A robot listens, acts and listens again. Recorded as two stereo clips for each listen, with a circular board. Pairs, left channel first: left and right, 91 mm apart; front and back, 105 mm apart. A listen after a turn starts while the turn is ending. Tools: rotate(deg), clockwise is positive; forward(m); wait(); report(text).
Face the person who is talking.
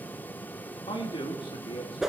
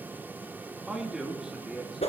rotate(-95)
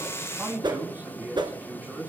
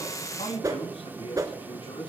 rotate(20)
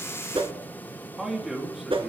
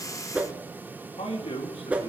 report("Found it: a man speaking, straight ahead, 2 to 4 m away.")